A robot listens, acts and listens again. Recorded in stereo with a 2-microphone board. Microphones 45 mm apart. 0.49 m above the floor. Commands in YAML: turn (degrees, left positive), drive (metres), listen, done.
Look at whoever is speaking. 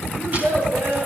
turn: -70
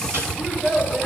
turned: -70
turn: -10
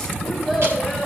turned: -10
done: "Facing the child speaking, 2 to 4 m away."